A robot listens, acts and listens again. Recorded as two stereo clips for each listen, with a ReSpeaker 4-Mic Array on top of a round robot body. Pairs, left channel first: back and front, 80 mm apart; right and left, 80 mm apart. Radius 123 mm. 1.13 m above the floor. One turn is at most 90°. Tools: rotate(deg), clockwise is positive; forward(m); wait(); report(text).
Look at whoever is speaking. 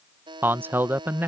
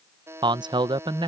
rotate(-65)
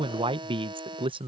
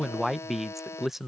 report("Found it: a man speaking, straight ahead.")